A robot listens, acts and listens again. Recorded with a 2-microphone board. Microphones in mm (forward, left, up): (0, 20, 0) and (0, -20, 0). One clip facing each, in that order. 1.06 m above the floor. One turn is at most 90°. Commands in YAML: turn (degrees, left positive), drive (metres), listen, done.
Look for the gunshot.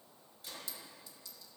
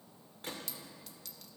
turn: -60
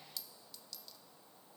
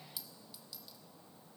listen: true
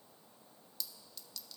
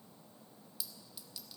done: "I heard a gunshot, but can't make it out now. It was about straight ahead or 60° right."